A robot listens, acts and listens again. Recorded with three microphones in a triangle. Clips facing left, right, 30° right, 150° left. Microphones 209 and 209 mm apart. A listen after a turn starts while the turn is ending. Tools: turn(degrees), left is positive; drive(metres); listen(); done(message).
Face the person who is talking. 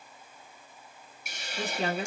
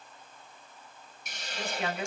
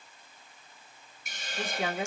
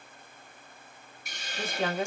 turn(degrees=40)
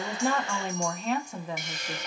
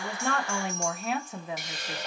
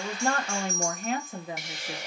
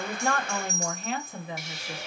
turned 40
done("Facing the woman speaking.")